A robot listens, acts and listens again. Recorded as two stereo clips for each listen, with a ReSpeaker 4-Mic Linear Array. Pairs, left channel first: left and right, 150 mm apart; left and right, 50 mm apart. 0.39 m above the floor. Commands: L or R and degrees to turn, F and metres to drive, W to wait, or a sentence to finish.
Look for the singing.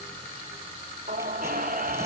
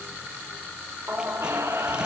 R70
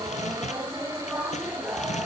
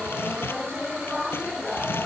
R15
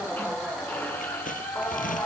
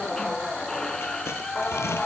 L10
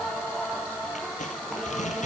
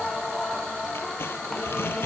Facing the singing, 2 to 4 m away.